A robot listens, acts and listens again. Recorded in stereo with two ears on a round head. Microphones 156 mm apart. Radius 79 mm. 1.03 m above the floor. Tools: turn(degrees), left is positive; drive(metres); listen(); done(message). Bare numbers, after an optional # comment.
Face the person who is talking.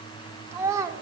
# The child speaking: about 20° right or 160° right.
turn(-20)
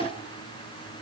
listen()
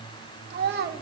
# So it is at 115° right.
turn(-115)
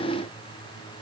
listen()
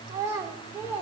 # The child speaking is now 10° right.
turn(-10)
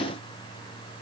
listen()
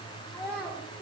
done("Facing the child speaking, 2 to 4 m away.")